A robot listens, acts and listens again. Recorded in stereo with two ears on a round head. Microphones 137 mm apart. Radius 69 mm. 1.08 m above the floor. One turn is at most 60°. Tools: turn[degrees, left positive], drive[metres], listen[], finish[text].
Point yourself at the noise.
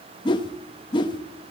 Thought: The whoosh: about 30° left or 150° left.
Action: turn[30]
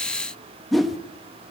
Action: finish[Found it: a whoosh, straight ahead, 1 to 2 m away.]